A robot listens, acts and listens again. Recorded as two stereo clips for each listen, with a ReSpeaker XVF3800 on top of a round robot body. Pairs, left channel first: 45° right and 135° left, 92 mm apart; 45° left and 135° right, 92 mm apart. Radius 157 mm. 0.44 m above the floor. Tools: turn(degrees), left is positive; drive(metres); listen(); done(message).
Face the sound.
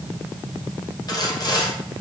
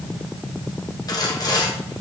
done("Found it: sawing, straight ahead.")